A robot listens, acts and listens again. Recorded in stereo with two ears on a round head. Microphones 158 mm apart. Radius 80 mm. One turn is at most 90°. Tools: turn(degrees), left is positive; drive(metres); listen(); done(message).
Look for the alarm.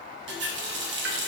listen()
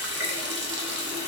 listen()
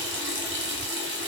done("I can't make out an alarm, only a running tap.")